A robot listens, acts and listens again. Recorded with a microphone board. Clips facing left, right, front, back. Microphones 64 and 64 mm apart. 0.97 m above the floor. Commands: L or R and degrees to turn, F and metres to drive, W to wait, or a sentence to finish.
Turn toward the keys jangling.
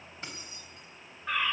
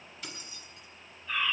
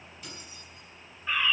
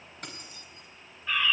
L150
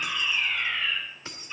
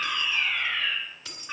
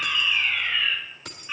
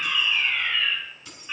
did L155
L30
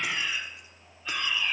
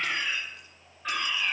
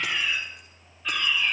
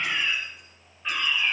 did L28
W
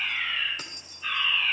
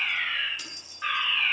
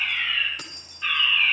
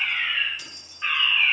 L40
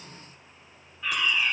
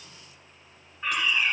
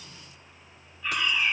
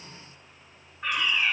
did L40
W
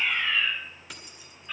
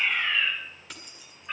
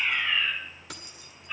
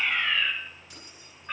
Facing the keys jangling.